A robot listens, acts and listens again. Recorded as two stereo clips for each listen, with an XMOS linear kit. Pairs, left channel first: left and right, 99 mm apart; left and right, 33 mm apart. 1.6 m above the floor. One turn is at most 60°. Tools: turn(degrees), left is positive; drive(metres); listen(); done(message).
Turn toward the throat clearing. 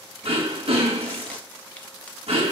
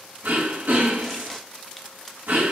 turn(degrees=-60)
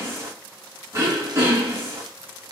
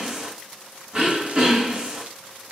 turn(degrees=-30)
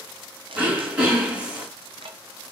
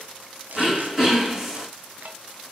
turn(degrees=-10)
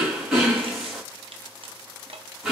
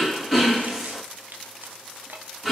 done("Facing the throat clearing.")